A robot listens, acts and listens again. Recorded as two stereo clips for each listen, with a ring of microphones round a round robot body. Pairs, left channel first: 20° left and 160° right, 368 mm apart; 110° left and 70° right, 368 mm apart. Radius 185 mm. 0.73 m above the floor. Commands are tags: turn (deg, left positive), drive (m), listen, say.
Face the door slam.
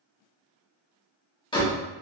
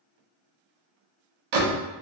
<turn deg="-55"/>
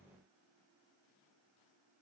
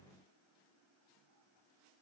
<say>Facing where the door slam came from. I can't hear it now.</say>